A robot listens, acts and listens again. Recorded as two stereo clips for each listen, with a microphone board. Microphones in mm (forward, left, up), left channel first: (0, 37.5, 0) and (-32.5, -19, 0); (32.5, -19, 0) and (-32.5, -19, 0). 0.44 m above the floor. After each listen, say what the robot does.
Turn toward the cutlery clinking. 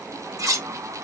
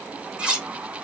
Turn 110° right.
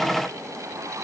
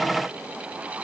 Keep listening.
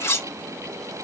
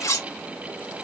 Turn 20° left.
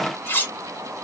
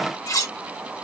Facing the cutlery clinking, under 1 m away.